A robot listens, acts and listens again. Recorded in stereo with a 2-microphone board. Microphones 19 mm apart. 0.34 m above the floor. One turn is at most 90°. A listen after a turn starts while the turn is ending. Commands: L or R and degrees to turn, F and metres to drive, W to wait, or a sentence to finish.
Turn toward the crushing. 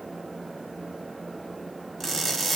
L30
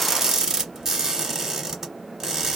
R30
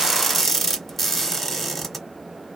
Facing the crushing, 1 to 2 m away.